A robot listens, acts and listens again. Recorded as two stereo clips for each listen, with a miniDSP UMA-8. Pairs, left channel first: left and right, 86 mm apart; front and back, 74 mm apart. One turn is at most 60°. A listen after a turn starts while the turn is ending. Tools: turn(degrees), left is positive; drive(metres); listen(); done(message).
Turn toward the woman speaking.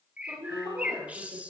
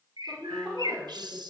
turn(degrees=-60)
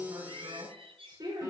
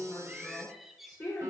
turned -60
turn(degrees=-45)
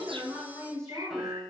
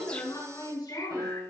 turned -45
done("Found it: a woman speaking, straight ahead, over 4 m away.")